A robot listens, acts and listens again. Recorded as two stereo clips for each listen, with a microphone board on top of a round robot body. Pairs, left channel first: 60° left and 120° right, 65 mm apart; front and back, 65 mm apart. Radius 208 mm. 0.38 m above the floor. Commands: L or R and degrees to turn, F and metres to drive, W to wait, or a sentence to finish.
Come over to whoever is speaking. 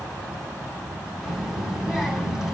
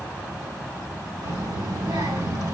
L155
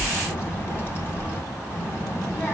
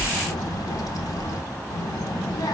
F1.0
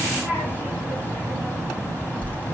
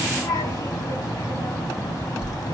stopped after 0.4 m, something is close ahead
Something is in my way. I am facing the child speaking but have not reached it.